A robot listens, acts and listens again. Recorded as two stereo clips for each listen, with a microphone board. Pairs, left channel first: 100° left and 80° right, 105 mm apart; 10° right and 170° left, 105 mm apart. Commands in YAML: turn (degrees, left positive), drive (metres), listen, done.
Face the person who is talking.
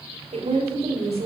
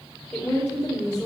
turn: -90
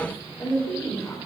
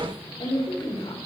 turn: 25
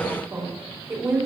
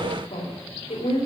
turn: -15
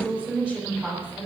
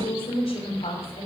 done: "Facing the woman speaking, 2 to 4 m away."